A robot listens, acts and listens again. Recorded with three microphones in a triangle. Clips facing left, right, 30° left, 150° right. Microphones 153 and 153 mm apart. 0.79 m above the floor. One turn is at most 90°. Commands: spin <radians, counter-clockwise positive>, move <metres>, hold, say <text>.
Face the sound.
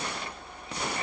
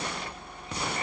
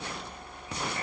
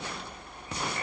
hold
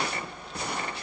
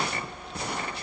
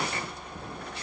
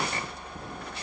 hold
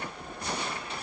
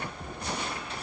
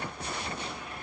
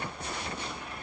say I can't make out anything to turn to.